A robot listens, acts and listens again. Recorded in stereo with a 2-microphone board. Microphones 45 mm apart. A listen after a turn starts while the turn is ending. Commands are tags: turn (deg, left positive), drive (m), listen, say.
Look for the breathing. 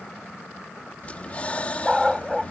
<turn deg="30"/>
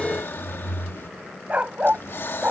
<turn deg="120"/>
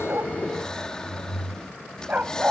<turn deg="20"/>
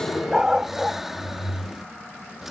<say>Found it: breathing, straight ahead.</say>